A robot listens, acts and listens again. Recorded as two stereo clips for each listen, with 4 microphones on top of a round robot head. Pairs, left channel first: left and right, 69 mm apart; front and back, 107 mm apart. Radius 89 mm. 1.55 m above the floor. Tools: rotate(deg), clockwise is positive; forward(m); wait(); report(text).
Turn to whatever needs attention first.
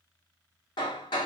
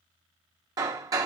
wait()
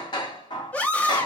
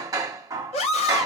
rotate(-20)
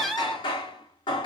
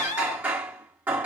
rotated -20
report("Found it: a scream, straight ahead, 1 to 2 m away.")